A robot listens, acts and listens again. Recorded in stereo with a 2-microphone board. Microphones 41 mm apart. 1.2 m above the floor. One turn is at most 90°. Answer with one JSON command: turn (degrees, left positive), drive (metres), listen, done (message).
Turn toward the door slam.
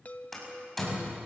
{"turn": 30}
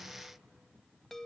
{"listen": true}
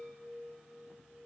{"done": "I heard a door slam, but can't make it out now. It was about 25° right or 145° left."}